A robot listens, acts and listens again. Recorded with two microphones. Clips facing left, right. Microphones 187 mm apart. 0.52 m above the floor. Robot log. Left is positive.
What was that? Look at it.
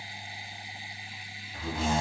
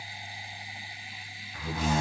note: The door slam: about 30° left or 150° left.
cmd yaw +30
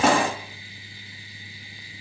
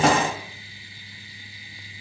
end: Found it: a door slam, straight ahead.